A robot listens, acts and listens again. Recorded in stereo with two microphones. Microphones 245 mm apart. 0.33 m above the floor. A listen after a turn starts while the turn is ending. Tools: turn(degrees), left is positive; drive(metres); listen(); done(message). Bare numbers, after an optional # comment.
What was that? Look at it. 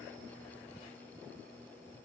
listen()
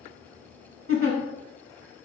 # The giggle: about 60° right or 120° right.
turn(-60)
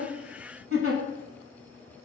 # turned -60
# So it is at 60° right.
turn(-60)
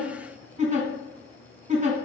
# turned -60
# The giggle is now 30° right.
turn(-30)
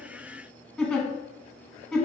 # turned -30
done("Facing the giggle, under 1 m away.")